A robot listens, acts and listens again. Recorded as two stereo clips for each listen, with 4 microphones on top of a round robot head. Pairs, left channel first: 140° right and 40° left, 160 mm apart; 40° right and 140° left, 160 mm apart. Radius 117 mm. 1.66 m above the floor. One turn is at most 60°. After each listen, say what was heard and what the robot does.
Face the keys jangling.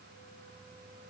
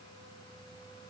Keep listening.
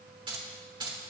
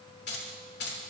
The keys jangling: 25° right. Turn 25° right.
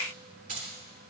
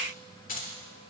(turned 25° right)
Facing the keys jangling.